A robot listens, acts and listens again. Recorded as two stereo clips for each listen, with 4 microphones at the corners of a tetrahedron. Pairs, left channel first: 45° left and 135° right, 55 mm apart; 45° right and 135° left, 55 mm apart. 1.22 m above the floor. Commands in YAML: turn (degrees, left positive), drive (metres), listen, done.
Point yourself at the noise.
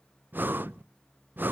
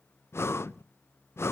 turn: -80
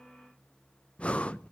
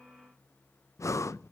turn: -25
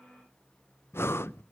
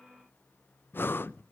done: "Facing the breathing."